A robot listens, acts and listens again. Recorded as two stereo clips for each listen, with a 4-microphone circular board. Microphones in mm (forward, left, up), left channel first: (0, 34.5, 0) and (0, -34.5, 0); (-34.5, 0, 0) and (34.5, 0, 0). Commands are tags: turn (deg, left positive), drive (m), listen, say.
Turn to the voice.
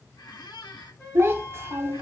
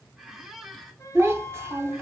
<turn deg="-50"/>
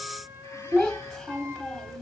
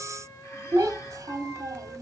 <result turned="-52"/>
<say>Facing the child speaking, under 1 m away.</say>